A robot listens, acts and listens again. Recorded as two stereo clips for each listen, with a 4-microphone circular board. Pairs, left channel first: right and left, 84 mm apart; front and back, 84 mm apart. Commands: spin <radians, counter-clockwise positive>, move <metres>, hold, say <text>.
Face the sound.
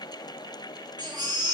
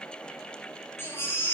spin 1.05
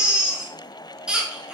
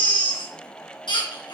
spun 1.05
spin 0.17
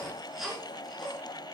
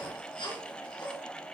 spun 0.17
say Facing the baby crying, over 4 m away.